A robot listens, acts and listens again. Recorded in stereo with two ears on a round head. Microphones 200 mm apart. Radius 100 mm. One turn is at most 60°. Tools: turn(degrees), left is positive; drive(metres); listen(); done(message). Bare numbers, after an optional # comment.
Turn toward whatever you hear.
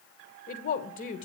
# The woman speaking: about 35° left or 145° left.
turn(35)
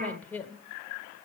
# So it is at 10° left.
turn(10)
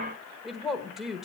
done("Facing the woman speaking.")